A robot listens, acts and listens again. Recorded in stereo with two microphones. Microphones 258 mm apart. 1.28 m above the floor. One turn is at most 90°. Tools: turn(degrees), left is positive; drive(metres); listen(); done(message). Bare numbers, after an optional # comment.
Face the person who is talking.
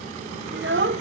# The child speaking: about 50° right or 130° right.
turn(-50)
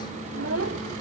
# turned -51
# So it is at 75° right.
turn(-75)
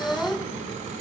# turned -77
done("Found it: a child speaking, straight ahead, under 1 m away.")